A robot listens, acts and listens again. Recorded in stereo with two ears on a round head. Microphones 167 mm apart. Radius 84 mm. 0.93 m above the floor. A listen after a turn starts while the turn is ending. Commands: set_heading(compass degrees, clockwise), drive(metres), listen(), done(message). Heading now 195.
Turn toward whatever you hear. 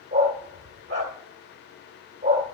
set_heading(230)
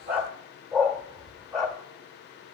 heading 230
done("Facing the dog barking.")